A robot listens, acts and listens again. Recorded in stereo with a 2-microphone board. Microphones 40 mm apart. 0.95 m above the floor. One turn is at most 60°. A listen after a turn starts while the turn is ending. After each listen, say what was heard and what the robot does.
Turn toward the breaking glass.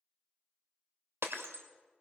Turn 60° right.
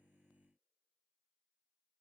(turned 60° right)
Nothing new. It was at 30° right. Turn 30° right.
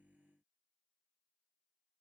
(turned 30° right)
I heard breaking glass from this way, but can't make it out now.